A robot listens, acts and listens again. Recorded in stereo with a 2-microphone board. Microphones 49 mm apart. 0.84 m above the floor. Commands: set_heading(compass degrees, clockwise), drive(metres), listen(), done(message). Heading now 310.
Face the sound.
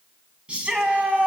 set_heading(330)
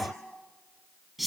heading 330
done("Facing the shout.")